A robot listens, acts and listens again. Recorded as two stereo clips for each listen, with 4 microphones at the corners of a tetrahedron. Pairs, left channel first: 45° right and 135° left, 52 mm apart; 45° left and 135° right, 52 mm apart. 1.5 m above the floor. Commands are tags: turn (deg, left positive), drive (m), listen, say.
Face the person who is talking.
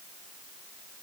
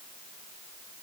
<listen/>
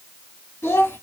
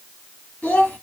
<turn deg="-15"/>
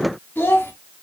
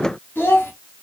<say>Facing the child speaking.</say>